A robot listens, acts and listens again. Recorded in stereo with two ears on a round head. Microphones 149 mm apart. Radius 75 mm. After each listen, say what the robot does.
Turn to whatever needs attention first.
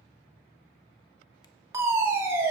Turn 20° right.
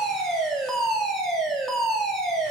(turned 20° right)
Found it: a fire alarm, straight ahead.